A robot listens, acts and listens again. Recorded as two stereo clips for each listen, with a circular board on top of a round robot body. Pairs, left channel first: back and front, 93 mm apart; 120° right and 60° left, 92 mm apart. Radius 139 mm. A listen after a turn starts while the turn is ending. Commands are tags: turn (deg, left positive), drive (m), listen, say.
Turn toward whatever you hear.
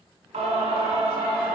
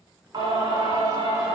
<turn deg="10"/>
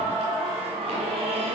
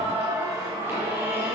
<say>Found it: singing, straight ahead.</say>